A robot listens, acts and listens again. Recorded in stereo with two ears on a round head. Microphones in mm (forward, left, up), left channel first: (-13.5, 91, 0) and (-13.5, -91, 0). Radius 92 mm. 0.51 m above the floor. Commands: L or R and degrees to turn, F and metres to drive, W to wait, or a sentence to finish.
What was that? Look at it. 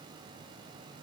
W
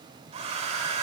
R35
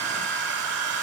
R110
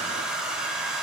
Facing the hair dryer.